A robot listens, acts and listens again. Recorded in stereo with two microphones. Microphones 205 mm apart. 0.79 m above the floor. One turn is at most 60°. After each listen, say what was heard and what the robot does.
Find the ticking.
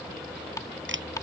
The ticking: about 15° left or 165° left. Turn 15° left.
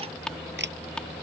Facing the ticking.